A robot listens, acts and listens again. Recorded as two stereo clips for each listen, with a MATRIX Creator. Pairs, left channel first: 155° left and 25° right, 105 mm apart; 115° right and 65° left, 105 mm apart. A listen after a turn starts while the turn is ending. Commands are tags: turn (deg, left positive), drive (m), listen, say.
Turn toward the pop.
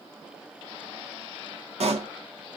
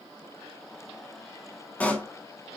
<turn deg="-35"/>
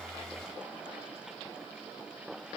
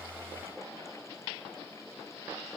<say>I heard a pop from this way, but can't make it out now.</say>